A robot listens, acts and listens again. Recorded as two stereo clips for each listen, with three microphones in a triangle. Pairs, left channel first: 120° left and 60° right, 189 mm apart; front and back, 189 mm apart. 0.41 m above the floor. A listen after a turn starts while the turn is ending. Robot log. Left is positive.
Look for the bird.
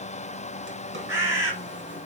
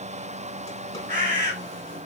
note: The bird: 135° right.
cmd yaw -135
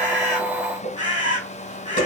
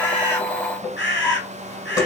end: Facing the bird.